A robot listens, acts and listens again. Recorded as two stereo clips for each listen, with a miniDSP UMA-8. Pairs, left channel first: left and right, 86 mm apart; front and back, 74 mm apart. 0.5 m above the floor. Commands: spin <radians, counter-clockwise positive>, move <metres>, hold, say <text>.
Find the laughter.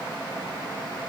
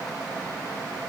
hold
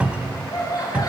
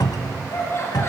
spin 0.87
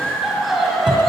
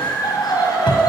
say Facing the laughter, 2 to 4 m away.